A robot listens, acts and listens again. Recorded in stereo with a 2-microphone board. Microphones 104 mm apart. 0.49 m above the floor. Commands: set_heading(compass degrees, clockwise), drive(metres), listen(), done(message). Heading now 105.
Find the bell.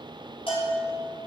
set_heading(45)
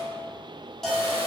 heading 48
done("Found it: a bell, straight ahead.")